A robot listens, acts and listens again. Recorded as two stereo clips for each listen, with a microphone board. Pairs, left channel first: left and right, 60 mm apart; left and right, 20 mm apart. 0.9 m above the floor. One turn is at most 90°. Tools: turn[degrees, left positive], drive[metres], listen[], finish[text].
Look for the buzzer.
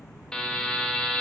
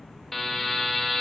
Action: turn[30]
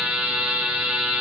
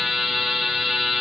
Thought: So it is at 15° right.
Action: turn[-15]
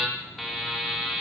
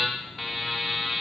Action: finish[Found it: a buzzer, straight ahead.]